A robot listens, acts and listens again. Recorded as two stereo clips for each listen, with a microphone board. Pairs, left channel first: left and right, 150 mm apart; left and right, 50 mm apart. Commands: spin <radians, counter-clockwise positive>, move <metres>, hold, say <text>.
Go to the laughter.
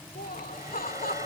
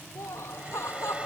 spin 1.31
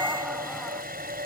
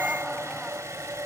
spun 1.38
hold
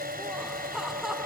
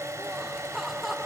move 1.0
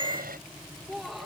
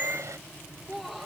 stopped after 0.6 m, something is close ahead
say Something is in my way. I am facing the laughter but have not reached it.